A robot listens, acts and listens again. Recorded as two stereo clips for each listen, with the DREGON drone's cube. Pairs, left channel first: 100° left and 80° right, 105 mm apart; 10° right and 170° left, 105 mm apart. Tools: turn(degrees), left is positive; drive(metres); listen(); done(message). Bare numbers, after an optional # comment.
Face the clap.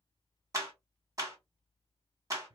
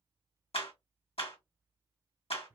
# The clap: 25° right.
turn(-25)
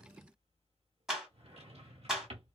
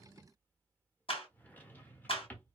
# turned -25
done("Facing the clap.")